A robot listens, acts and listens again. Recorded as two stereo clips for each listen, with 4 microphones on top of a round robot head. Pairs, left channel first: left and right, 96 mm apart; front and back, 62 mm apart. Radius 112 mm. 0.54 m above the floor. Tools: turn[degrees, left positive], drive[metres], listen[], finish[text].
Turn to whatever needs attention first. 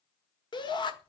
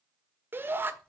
Thought: The shout: 125° left.
Action: turn[125]
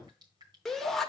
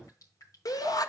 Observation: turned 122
Action: finish[Found it: a shout, straight ahead.]